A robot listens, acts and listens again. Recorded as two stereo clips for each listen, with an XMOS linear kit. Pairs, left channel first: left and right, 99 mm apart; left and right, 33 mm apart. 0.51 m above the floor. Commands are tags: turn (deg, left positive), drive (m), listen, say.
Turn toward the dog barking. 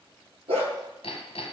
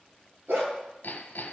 <turn deg="-90"/>
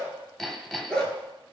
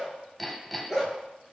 <turn deg="10"/>
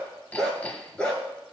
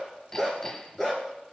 <turn deg="10"/>
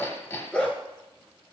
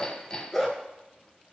<turn deg="20"/>
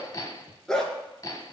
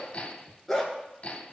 <say>Facing the dog barking.</say>